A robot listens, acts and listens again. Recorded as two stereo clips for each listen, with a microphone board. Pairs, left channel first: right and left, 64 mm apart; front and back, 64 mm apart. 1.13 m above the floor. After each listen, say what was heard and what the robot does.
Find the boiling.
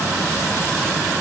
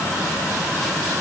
Keep listening.
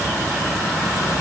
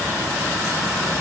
Keep listening.
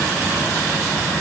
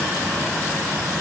I can't make out boiling to turn to.